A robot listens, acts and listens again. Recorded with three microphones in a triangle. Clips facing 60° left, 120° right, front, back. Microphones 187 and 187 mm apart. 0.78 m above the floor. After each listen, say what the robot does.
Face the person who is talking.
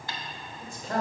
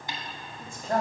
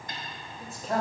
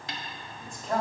Turn 85° right.
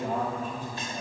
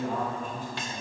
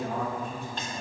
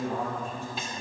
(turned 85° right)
Turn 10° left.
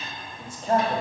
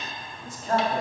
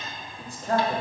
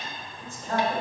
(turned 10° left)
Found it: a man speaking, straight ahead, 1 to 2 m away.